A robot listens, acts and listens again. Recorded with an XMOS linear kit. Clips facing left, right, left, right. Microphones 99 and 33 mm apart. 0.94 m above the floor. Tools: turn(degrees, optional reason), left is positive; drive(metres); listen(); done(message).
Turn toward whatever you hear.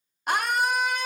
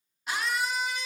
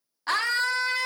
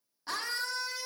turn(degrees=55, reason="The scream: about 55° left or 125° left.")
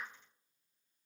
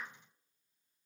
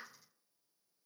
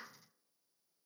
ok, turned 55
listen()
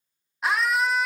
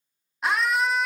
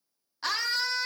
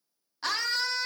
done("Facing the scream, under 1 m away.")